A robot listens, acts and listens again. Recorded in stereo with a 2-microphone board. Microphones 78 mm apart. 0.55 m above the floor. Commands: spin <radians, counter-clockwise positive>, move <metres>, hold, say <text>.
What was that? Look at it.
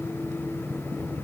hold
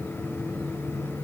hold
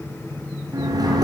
spin -1.05
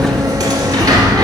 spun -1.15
spin -0.96
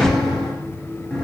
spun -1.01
say Found it: a sliding door, straight ahead, 1 to 2 m away.